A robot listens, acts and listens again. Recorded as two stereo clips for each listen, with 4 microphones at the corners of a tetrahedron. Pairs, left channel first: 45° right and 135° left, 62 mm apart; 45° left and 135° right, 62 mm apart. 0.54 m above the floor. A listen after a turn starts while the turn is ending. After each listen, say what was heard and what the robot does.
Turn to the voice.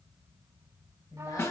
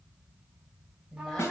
The woman speaking: 35° right. Turn 35° right.
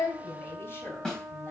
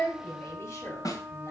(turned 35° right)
Facing the woman speaking, 2 to 4 m away.